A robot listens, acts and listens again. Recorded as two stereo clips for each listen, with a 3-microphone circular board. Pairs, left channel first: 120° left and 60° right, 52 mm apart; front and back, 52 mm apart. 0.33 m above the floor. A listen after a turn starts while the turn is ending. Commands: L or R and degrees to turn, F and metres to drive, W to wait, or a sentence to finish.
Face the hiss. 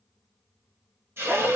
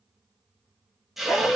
R95
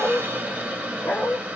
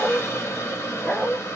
Facing the hiss.